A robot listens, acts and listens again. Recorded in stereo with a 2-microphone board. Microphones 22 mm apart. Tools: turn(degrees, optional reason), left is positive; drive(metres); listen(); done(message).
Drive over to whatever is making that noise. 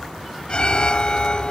turn(degrees=40, reason="The alarm: about 40° left or 140° left.")
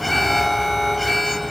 drive(metres=1.0)
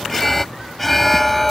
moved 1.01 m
drive(metres=1.0)
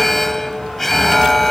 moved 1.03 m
turn(degrees=10, reason="The alarm is now 10° left.")
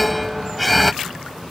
drive(metres=1.0)
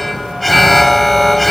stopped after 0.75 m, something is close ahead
done("I am next to the alarm.")